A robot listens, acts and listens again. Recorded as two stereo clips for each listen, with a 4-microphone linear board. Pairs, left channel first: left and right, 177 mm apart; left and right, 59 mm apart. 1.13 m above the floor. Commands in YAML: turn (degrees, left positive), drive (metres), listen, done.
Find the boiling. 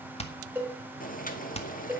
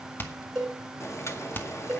turn: 50
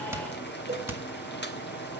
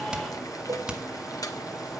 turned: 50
turn: 80
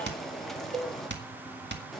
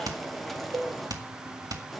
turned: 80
done: "Facing the boiling."